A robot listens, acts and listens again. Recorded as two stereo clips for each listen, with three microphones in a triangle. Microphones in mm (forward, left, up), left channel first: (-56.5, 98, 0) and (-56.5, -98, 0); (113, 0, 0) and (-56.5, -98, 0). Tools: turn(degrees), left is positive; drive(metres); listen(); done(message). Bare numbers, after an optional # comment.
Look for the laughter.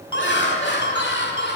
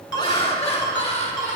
# The laughter: 80° left.
turn(80)
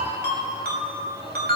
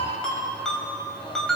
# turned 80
listen()
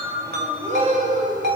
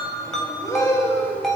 # The laughter is now 50° right.
turn(-50)
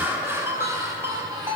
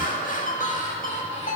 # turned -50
# The laughter is now 15° right.
turn(-15)
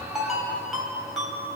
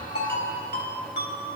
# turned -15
listen()
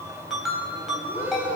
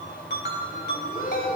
# The laughter is now 10° right.
turn(-10)
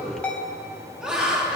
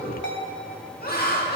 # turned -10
done("Facing the laughter.")